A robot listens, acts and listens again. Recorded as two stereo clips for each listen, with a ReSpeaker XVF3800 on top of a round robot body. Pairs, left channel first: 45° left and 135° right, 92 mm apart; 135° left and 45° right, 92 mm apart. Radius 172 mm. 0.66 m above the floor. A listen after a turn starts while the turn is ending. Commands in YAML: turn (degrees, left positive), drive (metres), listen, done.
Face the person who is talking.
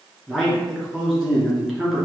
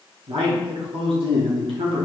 turn: -55
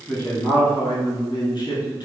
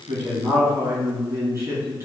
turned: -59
done: "Found it: a man speaking, straight ahead, 1 to 2 m away."